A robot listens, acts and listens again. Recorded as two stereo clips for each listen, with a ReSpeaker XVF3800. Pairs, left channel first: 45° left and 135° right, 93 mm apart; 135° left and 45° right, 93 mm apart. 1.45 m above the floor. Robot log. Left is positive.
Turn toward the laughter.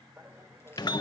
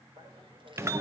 note: The laughter: 70° right.
cmd yaw -70
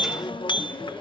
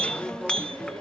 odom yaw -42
note: Nothing new. It was at 30° right.
cmd yaw -30
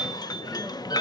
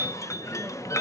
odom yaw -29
cmd idle
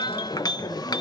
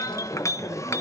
end: Facing where the laughter came from. I can't hear it now.